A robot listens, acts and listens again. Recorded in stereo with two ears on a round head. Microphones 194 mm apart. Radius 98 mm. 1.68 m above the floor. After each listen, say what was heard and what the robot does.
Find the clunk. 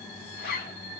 Keep listening.
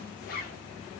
Keep listening.
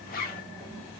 I can't make out a clunk to turn to.